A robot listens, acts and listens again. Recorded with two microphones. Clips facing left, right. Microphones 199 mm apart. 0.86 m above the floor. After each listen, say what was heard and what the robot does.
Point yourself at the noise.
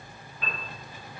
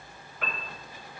Turn 90° right.
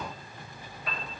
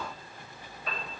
Found it: a piano, straight ahead.